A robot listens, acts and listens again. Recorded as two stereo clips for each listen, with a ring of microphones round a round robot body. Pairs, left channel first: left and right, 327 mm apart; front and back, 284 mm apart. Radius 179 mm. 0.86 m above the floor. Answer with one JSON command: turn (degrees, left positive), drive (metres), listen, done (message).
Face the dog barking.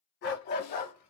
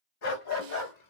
{"turn": 25}
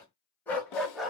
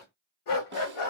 {"done": "Facing the dog barking."}